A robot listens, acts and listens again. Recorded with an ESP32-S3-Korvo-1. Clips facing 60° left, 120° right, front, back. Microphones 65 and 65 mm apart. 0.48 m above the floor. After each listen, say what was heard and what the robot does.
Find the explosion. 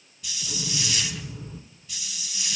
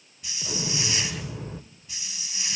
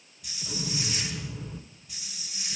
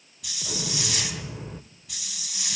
The explosion: 130° right. Turn 130° right.
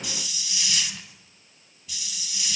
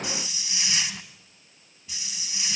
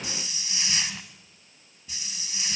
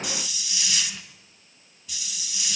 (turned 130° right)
I heard an explosion from this way, but can't make it out now.